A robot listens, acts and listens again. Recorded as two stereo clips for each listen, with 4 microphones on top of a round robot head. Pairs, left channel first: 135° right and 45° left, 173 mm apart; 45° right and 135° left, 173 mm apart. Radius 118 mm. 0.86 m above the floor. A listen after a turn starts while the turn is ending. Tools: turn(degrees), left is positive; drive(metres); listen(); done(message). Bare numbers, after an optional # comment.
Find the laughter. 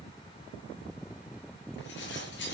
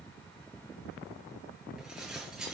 listen()
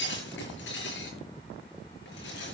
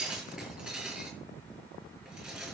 listen()
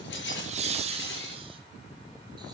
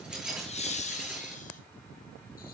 done("Found it: laughter, straight ahead, 2 to 4 m away.")